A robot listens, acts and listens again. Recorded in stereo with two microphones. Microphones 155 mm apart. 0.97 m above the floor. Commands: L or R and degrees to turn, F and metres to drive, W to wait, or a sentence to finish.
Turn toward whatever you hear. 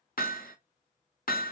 L70
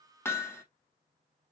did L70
L15
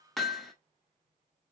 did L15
Found it: hammering, straight ahead, under 1 m away.